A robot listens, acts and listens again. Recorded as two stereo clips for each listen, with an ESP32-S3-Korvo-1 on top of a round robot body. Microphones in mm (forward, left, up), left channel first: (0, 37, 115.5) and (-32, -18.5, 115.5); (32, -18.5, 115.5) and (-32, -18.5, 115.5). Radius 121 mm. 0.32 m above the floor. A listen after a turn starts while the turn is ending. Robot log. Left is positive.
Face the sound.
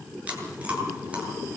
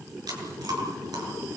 note: The chewing: 170° left.
cmd yaw +170
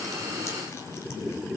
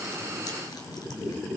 cmd idle
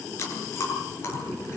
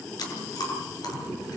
note: The chewing is now 10° left.
cmd yaw +10
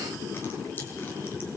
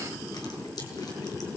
cmd idle
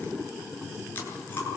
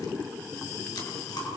cmd idle
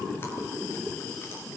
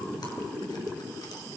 end: Facing where the chewing came from. I can't hear it now.